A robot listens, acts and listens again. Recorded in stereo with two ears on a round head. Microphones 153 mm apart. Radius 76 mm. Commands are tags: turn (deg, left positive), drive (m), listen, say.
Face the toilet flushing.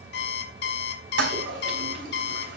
<turn deg="-90"/>
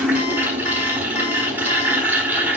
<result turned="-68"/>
<turn deg="-10"/>
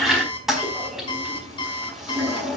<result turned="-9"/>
<say>Found it: a toilet flushing, straight ahead, over 4 m away.</say>